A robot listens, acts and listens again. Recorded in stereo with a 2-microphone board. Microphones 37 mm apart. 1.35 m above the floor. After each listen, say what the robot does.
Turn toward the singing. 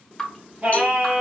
Turn 45° right.
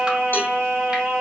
Turn 90° right.
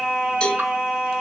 Turn 35° right.
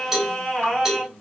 Turn 10° left.
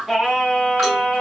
Found it: singing, straight ahead.